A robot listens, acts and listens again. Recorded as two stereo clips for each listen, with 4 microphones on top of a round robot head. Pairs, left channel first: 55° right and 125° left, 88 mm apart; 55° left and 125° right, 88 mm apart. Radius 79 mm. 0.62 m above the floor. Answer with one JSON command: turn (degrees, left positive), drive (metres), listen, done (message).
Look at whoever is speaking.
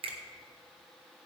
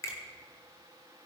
{"listen": true}
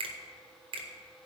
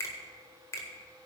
{"listen": true}
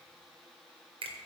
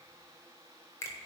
{"done": "I can't make out anyone speaking to turn to."}